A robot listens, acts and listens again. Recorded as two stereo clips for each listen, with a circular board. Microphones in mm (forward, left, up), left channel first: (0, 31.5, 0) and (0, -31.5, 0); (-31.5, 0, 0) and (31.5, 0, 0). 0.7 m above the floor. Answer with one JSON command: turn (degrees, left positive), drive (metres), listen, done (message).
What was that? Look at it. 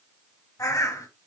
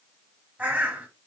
{"turn": 65}
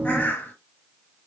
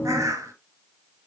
{"turn": 25}
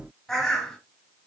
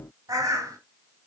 {"turn": 10}
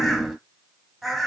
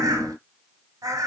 {"done": "Found it: a bird, straight ahead, 1 to 2 m away."}